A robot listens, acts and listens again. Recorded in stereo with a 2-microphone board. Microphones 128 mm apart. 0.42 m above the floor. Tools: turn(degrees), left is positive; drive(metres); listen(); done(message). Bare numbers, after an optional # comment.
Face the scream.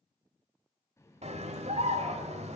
# The scream: about 60° right or 120° right.
turn(-60)
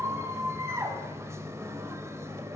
# So it is at 25° right.
turn(-25)
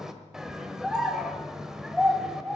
done("Facing the scream.")